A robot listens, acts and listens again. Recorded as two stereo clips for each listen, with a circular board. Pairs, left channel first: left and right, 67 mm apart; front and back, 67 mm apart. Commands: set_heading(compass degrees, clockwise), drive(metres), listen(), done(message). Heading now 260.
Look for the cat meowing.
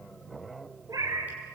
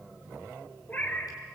set_heading(325)
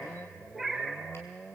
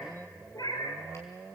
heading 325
done("Found it: a cat meowing, straight ahead.")